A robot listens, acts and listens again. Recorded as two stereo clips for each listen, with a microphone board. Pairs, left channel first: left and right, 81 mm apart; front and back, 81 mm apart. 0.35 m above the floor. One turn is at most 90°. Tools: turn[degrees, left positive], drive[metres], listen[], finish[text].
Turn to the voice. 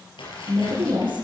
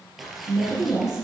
Thought: The woman speaking: 100° right.
Action: turn[-90]
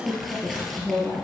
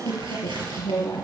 Thought: The woman speaking is now 15° right.
Action: turn[-15]
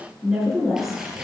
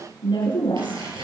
Action: finish[Found it: a woman speaking, straight ahead, over 4 m away.]